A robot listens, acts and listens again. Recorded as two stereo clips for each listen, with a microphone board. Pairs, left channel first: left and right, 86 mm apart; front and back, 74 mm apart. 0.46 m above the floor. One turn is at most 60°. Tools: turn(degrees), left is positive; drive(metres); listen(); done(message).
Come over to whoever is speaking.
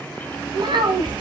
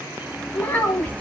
turn(degrees=-60)
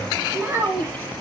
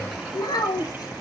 turn(degrees=-25)
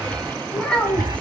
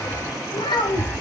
turn(degrees=10)
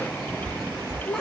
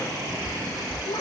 drive(metres=1.0)
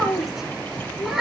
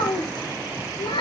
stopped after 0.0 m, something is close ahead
done("Something is in my way. I am facing the child speaking but have not reached it.")